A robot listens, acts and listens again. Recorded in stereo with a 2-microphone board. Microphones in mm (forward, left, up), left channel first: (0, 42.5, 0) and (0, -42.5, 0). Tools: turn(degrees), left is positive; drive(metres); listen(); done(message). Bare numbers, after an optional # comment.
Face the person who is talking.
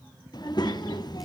# The child speaking: about 55° left or 125° left.
turn(55)
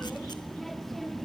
done("Found it: a child speaking, straight ahead.")